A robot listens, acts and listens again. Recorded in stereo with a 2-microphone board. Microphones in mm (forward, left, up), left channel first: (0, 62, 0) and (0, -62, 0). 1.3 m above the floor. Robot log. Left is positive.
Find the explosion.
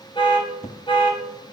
note: The explosion: about 70° left or 110° left.
cmd yaw +70
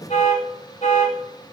cmd idle
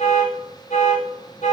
end: I heard an explosion, but can't make it out now. It was about straight ahead or 40° left.